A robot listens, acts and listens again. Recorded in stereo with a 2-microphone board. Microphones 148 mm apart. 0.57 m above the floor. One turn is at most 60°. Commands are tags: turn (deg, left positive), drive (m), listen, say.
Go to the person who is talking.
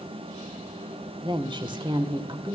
<turn deg="-35"/>
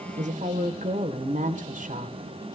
<turn deg="-60"/>
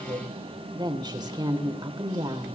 <turn deg="-30"/>
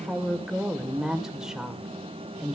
<drive m="1.0"/>
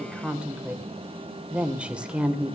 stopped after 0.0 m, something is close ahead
<say>Blocked. The woman speaking is further on, straight ahead.</say>